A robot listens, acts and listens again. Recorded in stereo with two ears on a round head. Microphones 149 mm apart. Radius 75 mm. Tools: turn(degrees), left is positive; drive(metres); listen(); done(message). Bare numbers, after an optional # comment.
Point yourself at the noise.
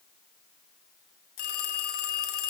# The phone ringing: about 60° left or 120° left.
turn(60)
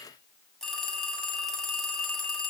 done("Facing the phone ringing.")